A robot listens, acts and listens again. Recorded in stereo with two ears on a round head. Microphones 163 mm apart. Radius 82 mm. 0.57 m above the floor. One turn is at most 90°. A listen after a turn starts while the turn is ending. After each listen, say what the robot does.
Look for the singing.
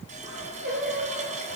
Turn 55° right.
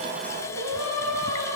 Turn 80° right.
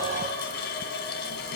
Keep listening.
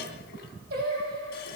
Turn 50° right.
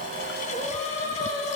Turn 25° left.
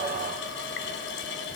Keep listening.
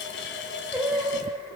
Found it: singing, straight ahead.